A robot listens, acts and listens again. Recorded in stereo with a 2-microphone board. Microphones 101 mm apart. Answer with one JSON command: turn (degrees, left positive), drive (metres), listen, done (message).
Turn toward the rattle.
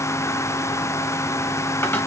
{"listen": true}
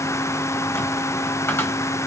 {"listen": true}
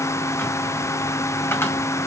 {"done": "I can't make out a rattle to turn to."}